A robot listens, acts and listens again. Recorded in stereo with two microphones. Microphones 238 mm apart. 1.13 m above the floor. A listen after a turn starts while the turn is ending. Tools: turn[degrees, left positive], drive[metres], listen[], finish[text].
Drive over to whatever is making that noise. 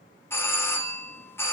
Action: turn[30]
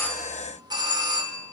Thought: So it is at 20° right.
Action: turn[-20]
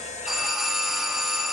Action: drive[1.0]
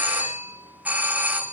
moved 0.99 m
Thought: The doorbell is now 10° right.
Action: turn[-10]
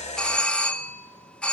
Action: drive[1.0]
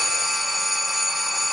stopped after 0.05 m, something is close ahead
Action: finish[I am next to the doorbell.]